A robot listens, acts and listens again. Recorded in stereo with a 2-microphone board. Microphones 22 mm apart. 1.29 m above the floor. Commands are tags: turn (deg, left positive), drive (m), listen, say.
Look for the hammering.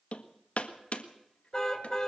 <turn deg="70"/>
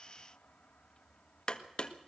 <turn deg="35"/>
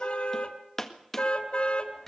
<turn deg="10"/>
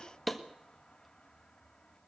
<say>Facing the hammering.</say>